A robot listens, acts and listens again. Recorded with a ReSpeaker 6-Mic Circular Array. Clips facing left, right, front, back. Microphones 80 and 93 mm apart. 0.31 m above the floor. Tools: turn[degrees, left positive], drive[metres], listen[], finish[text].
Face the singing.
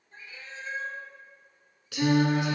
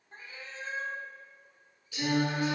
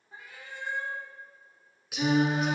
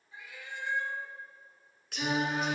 Thought: The singing: 90° left.
Action: turn[90]
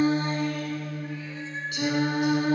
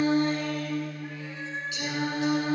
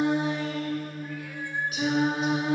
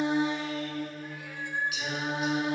Thought: The singing is now 60° left.
Action: turn[60]
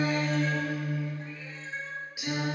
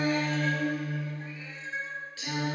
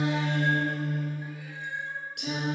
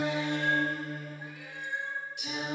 Thought: The singing is now 15° left.
Action: turn[15]
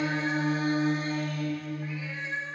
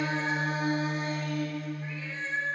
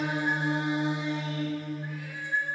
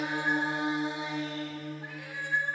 Action: finish[Found it: singing, straight ahead, 2 to 4 m away.]